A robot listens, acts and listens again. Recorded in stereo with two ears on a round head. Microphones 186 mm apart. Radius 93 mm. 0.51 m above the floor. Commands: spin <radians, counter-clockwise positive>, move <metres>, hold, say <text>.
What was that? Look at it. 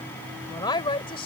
spin 0.44
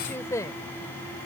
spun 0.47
spin 0.26
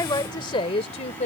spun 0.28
spin 0.61
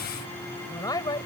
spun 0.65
spin 0.35
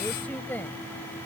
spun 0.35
spin 0.17
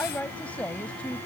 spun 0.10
say Facing the woman speaking.